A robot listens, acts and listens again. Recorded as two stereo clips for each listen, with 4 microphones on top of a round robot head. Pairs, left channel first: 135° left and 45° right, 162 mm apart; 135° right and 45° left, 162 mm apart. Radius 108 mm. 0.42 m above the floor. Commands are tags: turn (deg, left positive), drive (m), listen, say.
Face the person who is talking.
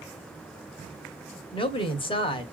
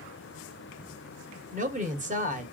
<turn deg="80"/>
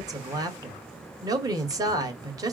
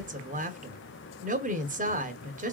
<turn deg="20"/>
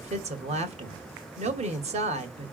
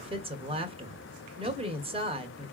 <say>Facing the woman speaking.</say>